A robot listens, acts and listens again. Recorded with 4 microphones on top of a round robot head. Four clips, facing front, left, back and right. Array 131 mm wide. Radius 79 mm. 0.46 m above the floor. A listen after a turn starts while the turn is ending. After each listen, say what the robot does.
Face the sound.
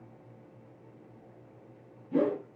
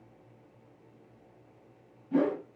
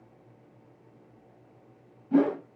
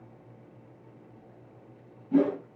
Turn 175° right.
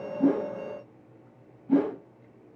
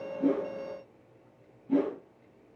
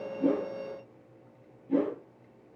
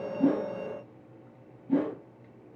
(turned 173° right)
Facing the whoosh.